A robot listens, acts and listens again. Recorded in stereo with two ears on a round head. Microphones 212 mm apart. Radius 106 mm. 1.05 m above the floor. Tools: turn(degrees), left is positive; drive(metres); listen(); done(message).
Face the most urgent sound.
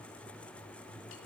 listen()
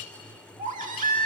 turn(degrees=-35)
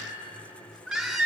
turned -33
done("Found it: a baby crying, straight ahead.")